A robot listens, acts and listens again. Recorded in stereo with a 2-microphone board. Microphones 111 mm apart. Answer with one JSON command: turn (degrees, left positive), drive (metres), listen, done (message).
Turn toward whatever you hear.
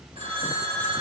{"turn": -70}
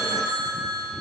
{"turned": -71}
{"turn": -40}
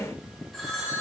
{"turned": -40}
{"done": "Facing the phone ringing."}